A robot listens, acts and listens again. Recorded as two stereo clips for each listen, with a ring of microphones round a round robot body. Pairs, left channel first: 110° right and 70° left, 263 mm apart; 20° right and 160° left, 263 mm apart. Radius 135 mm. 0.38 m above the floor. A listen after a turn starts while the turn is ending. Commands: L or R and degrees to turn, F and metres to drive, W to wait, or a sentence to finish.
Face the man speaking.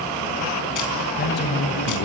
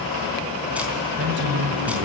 R155
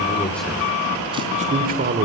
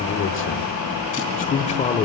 L40
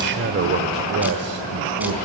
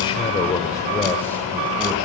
L65
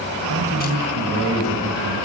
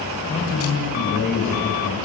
L30
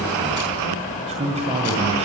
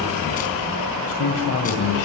Facing the man speaking.